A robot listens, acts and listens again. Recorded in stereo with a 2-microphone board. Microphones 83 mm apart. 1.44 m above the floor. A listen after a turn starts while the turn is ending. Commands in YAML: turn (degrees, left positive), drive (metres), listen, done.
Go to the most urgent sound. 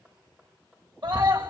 turn: -65
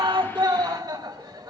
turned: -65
turn: -50
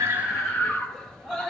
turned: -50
drive: 1.0
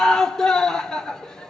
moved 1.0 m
drive: 1.0
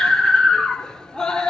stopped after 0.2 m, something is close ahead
turn: 10
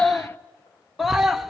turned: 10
done: "I am next to the scream."